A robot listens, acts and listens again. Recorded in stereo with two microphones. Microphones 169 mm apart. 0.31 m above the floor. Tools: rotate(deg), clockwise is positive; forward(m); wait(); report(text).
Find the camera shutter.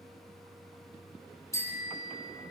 wait()
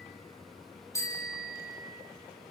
wait()
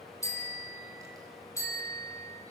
report("I can't make out a camera shutter to turn to.")